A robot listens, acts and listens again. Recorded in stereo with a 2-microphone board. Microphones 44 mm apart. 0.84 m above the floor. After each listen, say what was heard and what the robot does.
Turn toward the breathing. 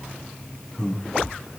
Turn 30° left.
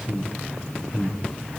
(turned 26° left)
So it is at 140° left. Turn 140° left.
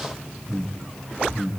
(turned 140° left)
Facing the breathing, over 4 m away.